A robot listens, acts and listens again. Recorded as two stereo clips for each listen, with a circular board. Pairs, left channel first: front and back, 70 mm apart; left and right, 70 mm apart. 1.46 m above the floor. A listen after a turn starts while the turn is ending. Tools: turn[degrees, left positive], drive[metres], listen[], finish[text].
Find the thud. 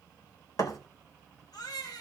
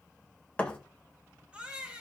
Thought: The thud: 20° left.
Action: turn[20]
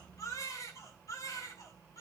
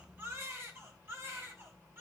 Action: finish[Facing where the thud came from. I can't hear it now.]